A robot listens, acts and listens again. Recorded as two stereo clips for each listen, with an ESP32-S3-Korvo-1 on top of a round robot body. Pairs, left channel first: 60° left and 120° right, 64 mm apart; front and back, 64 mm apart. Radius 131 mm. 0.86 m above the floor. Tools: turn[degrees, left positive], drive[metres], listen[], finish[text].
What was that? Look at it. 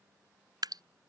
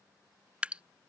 Thought: The dripping: 110° right.
Action: turn[-110]
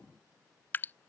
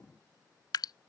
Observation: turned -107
Action: finish[Found it: dripping, straight ahead.]